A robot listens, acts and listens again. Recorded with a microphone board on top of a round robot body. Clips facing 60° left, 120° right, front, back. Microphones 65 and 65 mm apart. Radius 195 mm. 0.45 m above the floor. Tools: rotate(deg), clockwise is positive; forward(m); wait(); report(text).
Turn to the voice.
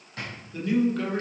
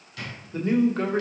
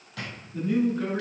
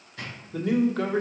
rotate(175)
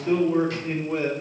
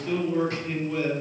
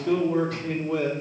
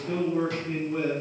report("Facing the man speaking.")